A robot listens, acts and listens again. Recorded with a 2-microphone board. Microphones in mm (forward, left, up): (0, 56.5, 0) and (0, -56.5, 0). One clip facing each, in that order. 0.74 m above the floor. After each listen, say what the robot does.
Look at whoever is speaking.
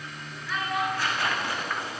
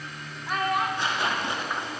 Turn 50° right.
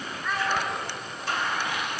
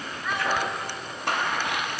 Facing the child speaking.